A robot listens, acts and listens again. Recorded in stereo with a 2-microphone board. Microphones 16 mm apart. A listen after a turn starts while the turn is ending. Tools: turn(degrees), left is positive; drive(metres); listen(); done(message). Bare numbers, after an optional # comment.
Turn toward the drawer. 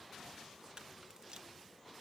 listen()
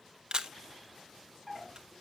turn(30)
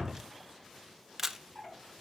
# So it is at 140° left.
turn(140)
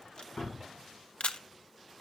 listen()
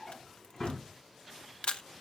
# The drawer is now 30° left.
turn(30)
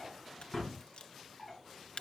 done("Found it: a drawer, straight ahead.")